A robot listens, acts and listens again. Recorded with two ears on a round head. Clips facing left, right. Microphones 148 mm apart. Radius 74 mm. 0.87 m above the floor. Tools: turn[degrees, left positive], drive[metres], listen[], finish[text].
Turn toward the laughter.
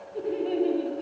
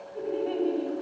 Thought: The laughter: about 25° left or 155° left.
Action: turn[25]
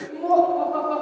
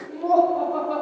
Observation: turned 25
Thought: So it is at 10° right.
Action: turn[-10]
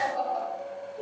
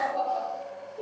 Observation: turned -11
Thought: The laughter is now 10° right.
Action: turn[-10]
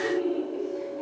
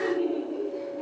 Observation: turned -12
Action: finish[Facing the laughter, 2 to 4 m away.]